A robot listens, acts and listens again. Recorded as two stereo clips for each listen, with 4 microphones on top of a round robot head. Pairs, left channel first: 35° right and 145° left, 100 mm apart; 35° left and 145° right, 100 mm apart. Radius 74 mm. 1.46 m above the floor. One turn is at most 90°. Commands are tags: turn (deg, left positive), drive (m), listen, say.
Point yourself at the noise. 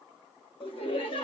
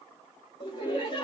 <turn deg="-10"/>
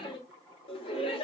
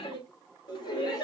<turn deg="-10"/>
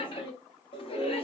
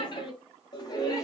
<turn deg="-15"/>
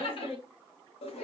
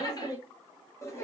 <turn deg="-25"/>
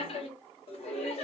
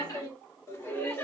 <turn deg="-30"/>
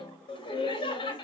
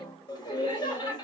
<say>Found it: laughter, straight ahead, 1 to 2 m away.</say>